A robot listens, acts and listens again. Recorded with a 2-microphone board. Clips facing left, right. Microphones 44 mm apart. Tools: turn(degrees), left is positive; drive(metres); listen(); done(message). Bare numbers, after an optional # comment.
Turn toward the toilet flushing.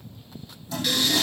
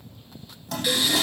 # The toilet flushing: about 65° right or 115° right.
turn(-65)
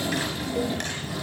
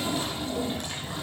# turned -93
listen()
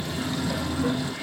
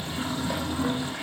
# So it is at 25° right.
turn(-25)
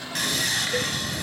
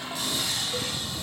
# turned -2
# The toilet flushing is now 20° right.
turn(-20)
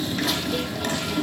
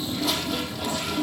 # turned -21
done("Found it: a toilet flushing, straight ahead, over 4 m away.")